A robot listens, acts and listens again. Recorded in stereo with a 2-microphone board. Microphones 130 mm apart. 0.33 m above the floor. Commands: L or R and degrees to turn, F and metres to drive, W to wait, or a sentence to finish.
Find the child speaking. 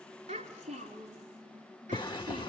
R75
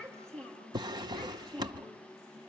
L10
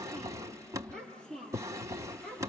Found it: a child speaking, straight ahead.